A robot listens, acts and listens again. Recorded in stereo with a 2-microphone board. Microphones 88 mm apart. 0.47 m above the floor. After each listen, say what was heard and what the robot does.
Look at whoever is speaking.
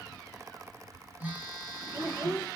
The child speaking: about 45° right or 135° right. Turn 45° right.
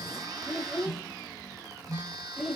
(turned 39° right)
Facing the child speaking, 1 to 2 m away.